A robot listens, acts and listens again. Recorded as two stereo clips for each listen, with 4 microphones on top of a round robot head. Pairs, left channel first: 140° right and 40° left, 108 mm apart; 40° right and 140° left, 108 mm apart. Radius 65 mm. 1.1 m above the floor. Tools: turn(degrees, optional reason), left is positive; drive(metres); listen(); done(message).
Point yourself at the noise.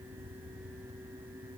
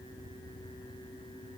listen()
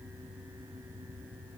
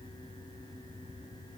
listen()
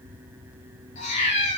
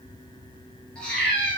turn(degrees=-120, reason="The cat meowing: 120° right.")
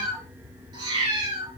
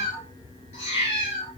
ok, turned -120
done("Facing the cat meowing.")